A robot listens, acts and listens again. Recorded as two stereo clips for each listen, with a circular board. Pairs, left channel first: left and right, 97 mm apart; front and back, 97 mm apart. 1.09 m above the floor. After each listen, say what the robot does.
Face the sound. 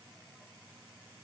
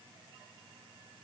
Keep listening.
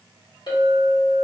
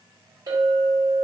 Turn 130° left.
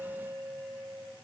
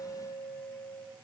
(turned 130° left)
Facing the clink.